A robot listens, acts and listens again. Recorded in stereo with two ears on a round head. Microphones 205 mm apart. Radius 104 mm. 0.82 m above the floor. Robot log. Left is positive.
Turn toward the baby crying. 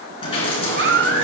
note: The baby crying: about 50° right or 130° right.
cmd yaw -50
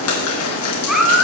end: Found it: a baby crying, straight ahead, 2 to 4 m away.